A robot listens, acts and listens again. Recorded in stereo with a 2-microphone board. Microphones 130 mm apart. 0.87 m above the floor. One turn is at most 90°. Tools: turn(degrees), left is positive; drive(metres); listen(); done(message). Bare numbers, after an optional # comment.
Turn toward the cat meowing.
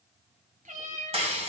turn(-90)
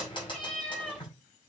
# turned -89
done("Facing the cat meowing, 2 to 4 m away.")